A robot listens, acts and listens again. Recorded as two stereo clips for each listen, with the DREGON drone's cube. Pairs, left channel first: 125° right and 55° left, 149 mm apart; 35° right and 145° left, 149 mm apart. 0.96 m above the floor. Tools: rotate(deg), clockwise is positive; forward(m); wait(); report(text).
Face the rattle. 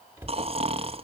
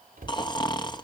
wait()
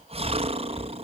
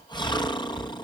wait()
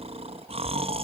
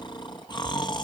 report("I can't make out a rattle, only snoring and a cupboard door.")